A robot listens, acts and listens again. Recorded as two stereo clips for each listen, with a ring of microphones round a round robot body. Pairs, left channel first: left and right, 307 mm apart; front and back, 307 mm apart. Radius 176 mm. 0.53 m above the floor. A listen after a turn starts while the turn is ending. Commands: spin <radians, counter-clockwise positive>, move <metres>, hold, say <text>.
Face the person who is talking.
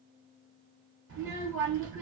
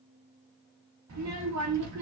spin -2.53
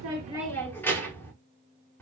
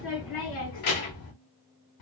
say Found it: a child speaking, straight ahead, 1 to 2 m away.